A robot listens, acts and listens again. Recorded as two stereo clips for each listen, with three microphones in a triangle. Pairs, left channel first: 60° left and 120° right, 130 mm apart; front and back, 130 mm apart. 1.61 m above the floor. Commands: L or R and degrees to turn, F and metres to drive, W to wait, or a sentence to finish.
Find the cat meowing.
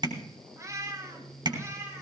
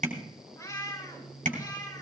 R55
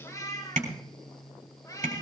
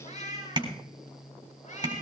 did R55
Found it: a cat meowing, straight ahead, 2 to 4 m away.